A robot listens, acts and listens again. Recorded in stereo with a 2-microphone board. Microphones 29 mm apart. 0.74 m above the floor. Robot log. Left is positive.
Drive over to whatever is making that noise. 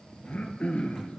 note: The throat clearing: about 50° left or 130° left.
cmd yaw +50
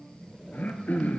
note: So it is at 80° left.
cmd yaw +80
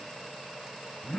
note: The throat clearing is now 20° left.
cmd yaw +20
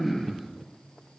cmd fwd 1.0
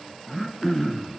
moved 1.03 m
cmd fwd 1.0
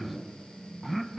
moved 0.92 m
cmd fwd 1.0
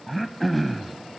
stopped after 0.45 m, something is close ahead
end: Arrived at the throat clearing, straight ahead.